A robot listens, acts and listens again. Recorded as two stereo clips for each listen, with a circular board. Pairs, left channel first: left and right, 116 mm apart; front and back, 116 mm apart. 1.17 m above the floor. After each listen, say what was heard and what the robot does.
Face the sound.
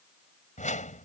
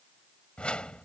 The whoosh: 80° left. Turn 80° left.
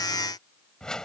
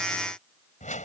Found it: a whoosh, straight ahead.